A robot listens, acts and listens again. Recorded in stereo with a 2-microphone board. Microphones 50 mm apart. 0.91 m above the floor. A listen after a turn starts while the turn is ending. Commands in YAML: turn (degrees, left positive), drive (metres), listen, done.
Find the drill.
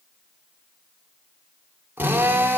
turn: -35
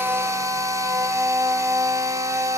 turn: -110
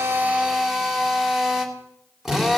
done: "Found it: a drill, straight ahead."